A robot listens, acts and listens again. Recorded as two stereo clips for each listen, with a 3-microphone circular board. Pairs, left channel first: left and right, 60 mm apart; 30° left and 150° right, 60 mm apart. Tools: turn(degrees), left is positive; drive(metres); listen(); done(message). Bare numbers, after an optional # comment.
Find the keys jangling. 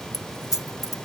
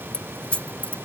# The keys jangling: 95° left.
turn(95)
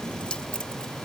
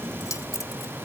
# The keys jangling is now 15° left.
turn(15)
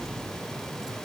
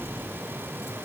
listen()
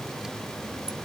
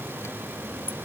listen()
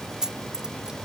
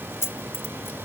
# The keys jangling is now 10° right.
turn(-10)
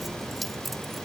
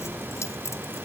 done("Facing the keys jangling.")